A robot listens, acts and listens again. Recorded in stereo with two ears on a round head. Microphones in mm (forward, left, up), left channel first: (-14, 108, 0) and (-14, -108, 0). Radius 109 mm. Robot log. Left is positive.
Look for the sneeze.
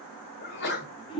note: The sneeze: about 45° left or 135° left.
cmd yaw +45
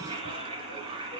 cmd idle
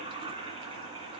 end: I heard a sneeze, but can't make it out now. It was about straight ahead or 90° left.